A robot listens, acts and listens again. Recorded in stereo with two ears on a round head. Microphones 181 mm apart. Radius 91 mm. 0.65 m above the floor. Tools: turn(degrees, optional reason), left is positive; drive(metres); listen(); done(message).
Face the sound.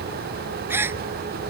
turn(degrees=-30)
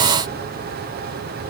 listen()
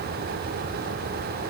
done("I heard a gasp, but can't make it out now. It was about 20° left or 140° right.")